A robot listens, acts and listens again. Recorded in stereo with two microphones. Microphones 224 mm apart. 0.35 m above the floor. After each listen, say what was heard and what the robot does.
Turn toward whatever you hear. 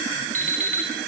The alarm clock: about 35° right or 145° right. Turn 35° right.
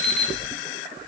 Found it: an alarm clock, straight ahead, 2 to 4 m away.